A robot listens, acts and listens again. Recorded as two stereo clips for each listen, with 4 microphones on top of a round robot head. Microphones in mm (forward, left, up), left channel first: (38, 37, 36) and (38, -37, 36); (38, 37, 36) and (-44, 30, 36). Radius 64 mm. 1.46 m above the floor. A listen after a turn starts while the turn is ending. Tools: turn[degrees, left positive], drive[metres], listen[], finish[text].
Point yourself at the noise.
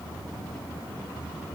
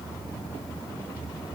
Action: listen[]
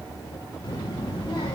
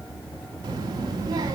Thought: The child speaking: 145° left.
Action: turn[145]
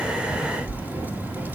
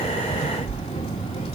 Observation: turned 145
Thought: The child speaking is now 25° right.
Action: turn[-25]
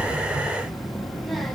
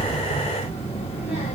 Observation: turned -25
Action: finish[Facing the child speaking.]